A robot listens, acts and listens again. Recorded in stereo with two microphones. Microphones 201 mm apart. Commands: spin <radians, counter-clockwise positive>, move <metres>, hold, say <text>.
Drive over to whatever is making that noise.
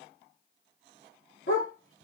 spin 1.57
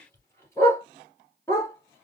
spin 0.26
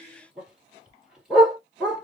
move 1.0
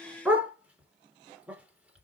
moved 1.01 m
move 1.0
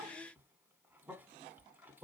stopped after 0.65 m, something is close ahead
hold
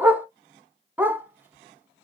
spin -0.17
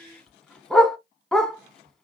say Arrived at the dog barking, straight ahead.